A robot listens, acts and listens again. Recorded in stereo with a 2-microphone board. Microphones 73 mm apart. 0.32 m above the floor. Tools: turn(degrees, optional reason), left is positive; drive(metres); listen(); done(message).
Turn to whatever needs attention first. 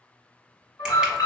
turn(degrees=60, reason="The alarm: about 60° left or 120° left.")
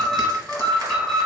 turn(degrees=10, reason="So it is at 10° left.")
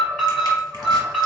done("Facing the alarm.")